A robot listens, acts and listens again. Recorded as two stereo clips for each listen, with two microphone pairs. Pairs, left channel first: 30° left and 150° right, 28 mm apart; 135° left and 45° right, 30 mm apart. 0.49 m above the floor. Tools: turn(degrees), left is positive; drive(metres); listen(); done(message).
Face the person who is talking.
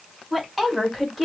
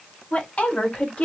turn(degrees=120)
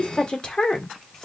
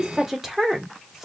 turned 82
turn(degrees=30)
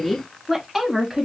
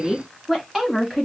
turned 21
turn(degrees=-125)
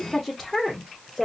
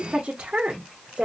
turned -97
turn(degrees=-50)
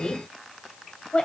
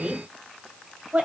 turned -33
turn(degrees=-20)
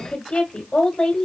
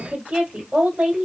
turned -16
done("Found it: a woman speaking, straight ahead, 1 to 2 m away.")